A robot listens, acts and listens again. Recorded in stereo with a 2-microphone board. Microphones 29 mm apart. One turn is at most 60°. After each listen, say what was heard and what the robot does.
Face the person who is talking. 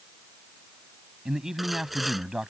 The man speaking: about 15° right or 165° right. Turn 15° right.
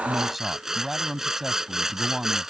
Facing the man speaking.